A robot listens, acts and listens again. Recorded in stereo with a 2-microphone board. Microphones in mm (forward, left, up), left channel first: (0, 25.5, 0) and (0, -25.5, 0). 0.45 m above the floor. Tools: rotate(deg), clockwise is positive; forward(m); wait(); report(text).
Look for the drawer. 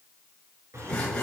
rotate(75)
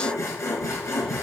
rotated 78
wait()
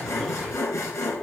wait()
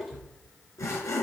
report("Facing the drawer, 2 to 4 m away.")